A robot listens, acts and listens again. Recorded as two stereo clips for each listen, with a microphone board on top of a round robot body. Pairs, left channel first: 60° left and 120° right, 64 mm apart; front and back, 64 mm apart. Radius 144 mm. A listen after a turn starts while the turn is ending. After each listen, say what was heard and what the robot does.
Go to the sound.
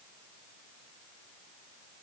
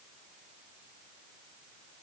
Keep listening.
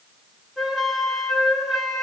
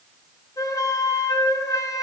The flute: 30° right. Turn 30° right.
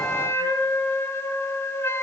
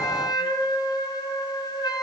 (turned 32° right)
Drive 1.0 m forward.
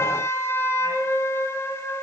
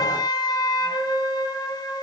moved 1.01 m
The flute is now 10° left. Turn 10° left.
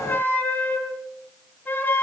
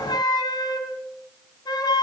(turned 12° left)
Drive 1.0 m forward.
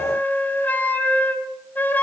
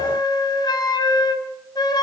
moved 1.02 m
Drive 1.0 m forward.
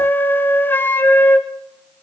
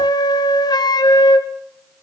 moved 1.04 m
Drive 1.0 m forward.
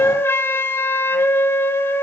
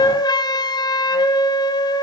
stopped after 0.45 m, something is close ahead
Arrived at the flute, straight ahead.